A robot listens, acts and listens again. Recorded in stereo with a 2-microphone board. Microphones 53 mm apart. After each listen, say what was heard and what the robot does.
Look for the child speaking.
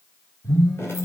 Keep listening.
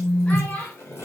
The child speaking: about 25° left or 155° left. Turn 25° left.
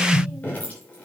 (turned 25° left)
Keep listening.
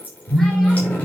Keep listening.
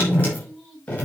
I heard a child speaking, but can't make it out now. It was about straight ahead or 130° left.